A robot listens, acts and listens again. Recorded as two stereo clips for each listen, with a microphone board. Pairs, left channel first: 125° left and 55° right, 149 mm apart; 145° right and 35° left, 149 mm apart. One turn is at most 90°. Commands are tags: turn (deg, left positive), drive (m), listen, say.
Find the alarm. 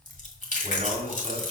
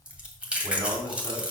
<listen/>
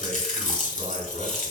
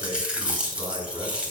<listen/>
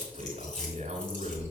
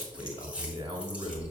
<say>I can't make out an alarm, only chewing and a man speaking.</say>